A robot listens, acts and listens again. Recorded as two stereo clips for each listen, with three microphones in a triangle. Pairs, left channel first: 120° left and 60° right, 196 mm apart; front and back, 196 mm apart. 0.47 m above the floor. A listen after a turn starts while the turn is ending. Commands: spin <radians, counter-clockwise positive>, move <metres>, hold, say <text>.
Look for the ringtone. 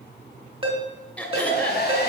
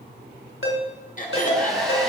say Facing the ringtone.